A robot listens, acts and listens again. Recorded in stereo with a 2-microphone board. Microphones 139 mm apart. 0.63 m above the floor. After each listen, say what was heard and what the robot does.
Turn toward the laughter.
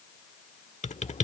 Keep listening.
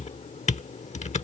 Keep listening.
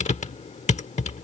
I can't make out laughter, only typing on a keyboard.